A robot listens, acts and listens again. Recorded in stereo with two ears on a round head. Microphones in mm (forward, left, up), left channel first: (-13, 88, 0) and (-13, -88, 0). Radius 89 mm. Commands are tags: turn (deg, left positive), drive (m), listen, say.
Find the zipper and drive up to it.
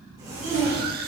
<turn deg="-20"/>
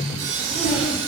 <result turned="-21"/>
<drive m="1.0"/>
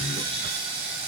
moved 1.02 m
<listen/>
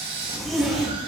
<drive m="1.0"/>
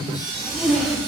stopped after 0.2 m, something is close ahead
<say>Arrived at the zipper, straight ahead.</say>